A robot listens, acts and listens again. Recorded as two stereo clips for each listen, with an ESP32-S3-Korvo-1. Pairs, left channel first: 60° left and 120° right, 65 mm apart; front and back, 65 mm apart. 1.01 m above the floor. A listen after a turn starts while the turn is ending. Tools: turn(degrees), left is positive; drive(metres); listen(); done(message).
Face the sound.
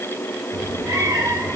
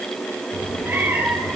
turn(degrees=-115)
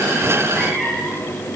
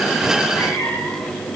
turn(degrees=-25)
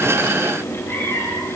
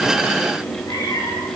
turn(degrees=10)
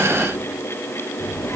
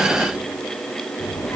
turn(degrees=10)
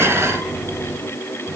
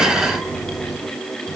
done("Found it: a cat meowing, straight ahead.")